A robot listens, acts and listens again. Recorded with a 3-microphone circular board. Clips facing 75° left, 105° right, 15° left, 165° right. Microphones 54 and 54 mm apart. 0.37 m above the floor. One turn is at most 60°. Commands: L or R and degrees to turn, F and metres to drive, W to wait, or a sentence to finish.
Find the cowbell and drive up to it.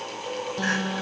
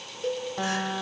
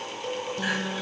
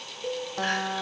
R60
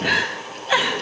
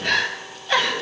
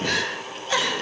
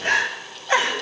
R35
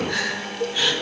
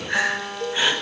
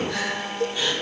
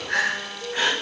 F1.0
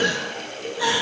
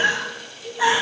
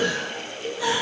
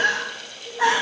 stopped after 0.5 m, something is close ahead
L10
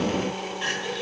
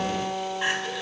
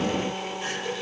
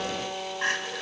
W
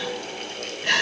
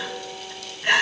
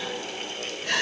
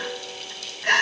W
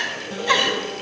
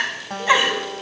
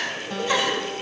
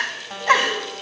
Facing where the cowbell came from. I can't hear it now. I did not reach it.